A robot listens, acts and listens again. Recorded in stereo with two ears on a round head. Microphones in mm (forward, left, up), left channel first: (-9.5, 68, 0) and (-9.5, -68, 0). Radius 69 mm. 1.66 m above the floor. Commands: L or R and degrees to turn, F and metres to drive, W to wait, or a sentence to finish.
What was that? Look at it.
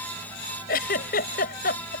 L70
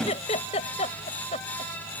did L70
L40
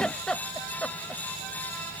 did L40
Found it: a giggle, straight ahead.